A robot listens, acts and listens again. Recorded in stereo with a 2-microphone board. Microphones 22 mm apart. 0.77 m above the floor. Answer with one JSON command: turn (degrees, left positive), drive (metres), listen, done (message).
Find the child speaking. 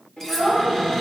{"turn": 70}
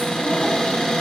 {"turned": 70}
{"listen": true}
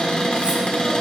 {"listen": true}
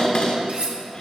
{"done": "I heard a child speaking, but can't make it out now. It was about straight ahead or 40° left."}